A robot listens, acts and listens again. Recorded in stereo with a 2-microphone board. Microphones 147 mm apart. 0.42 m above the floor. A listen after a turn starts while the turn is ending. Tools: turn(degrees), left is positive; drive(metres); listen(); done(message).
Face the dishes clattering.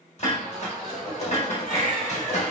turn(degrees=50)
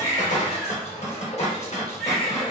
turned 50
turn(degrees=60)
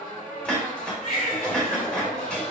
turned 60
done("Found it: dishes clattering, straight ahead, under 1 m away.")